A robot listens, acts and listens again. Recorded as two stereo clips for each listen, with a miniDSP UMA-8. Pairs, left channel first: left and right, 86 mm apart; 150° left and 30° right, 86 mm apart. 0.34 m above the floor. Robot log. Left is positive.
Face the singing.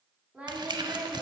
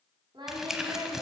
note: The singing: 25° right.
cmd yaw -25
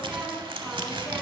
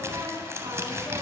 note: The singing is now 10° right.
cmd yaw -10
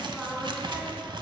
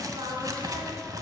note: The singing is now 10° right.
cmd yaw -10
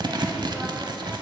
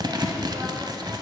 cmd idle
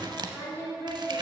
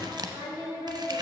note: The singing is now 25° right.
cmd yaw -25
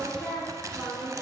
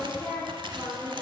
end: Found it: singing, straight ahead, 2 to 4 m away.